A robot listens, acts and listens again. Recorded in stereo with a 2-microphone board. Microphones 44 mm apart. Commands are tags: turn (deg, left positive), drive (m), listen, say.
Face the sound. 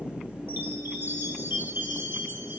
<turn deg="-55"/>
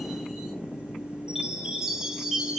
<turn deg="-15"/>
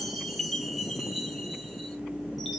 <say>Found it: a chime, straight ahead, 1 to 2 m away.</say>